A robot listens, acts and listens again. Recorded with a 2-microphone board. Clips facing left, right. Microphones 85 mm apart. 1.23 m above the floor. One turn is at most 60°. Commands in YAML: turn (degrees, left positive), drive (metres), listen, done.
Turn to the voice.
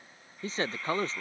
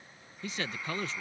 turn: 35
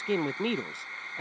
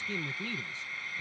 turn: 60
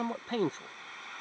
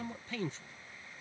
turn: 50
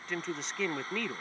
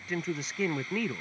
done: "Facing the man speaking."